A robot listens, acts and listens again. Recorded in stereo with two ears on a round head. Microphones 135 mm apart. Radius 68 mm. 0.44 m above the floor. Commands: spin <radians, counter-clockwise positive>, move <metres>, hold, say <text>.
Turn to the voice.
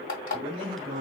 spin -0.61
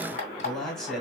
say Found it: a man speaking, straight ahead, 2 to 4 m away.